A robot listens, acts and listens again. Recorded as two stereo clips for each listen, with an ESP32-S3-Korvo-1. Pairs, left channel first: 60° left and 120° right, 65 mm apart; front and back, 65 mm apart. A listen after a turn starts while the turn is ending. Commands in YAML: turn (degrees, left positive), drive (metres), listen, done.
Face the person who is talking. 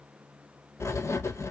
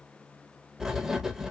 listen: true
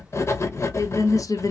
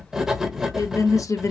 turn: 35
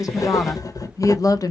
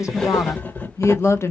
turn: 45
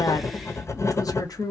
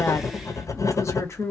turn: 45
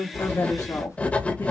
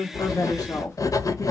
listen: true
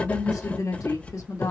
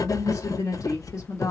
listen: true
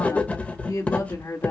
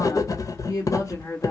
turn: 30
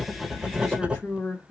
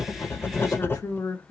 turn: -10
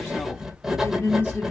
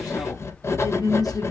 done: "Facing the woman speaking, 1 to 2 m away."